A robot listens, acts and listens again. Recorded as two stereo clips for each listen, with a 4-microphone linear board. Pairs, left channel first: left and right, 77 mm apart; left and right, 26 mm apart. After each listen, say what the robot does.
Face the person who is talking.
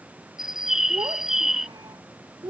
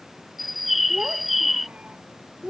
Turn 90° right.
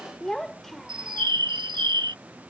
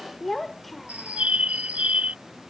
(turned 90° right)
Facing the child speaking.